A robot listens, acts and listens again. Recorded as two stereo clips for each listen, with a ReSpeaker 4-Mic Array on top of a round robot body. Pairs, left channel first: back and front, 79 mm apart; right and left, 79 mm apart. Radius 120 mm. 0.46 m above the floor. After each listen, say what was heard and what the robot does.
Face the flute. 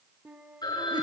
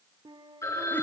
The flute: 70° left. Turn 70° left.
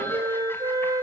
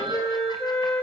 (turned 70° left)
The flute is now 25° right. Turn 25° right.
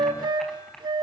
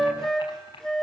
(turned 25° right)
Found it: a flute, straight ahead, 2 to 4 m away.